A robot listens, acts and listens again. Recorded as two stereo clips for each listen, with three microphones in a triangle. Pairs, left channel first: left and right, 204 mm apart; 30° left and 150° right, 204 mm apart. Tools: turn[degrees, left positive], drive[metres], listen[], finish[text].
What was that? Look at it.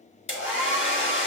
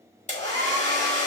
Thought: The hair dryer: 80° left.
Action: turn[80]
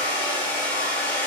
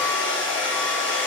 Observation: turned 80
Thought: The hair dryer is now 10° left.
Action: turn[10]
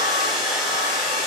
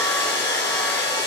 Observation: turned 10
Action: finish[Found it: a hair dryer, straight ahead.]